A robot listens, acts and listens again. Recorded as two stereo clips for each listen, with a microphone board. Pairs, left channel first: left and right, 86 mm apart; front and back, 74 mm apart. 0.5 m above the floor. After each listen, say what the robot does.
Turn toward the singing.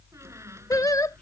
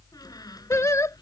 Turn 45° left.
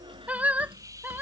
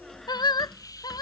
Turn 20° right.
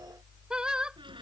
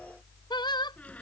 Turn 10° right.
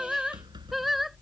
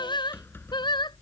Facing the singing.